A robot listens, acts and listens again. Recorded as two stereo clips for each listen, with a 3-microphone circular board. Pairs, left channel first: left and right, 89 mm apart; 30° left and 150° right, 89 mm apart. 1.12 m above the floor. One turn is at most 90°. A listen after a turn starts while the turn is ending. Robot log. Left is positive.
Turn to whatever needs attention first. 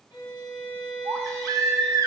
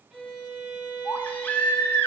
note: The baby crying: 40° right.
cmd yaw -40
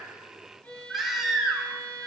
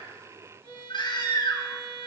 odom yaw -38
end: Facing the baby crying, under 1 m away.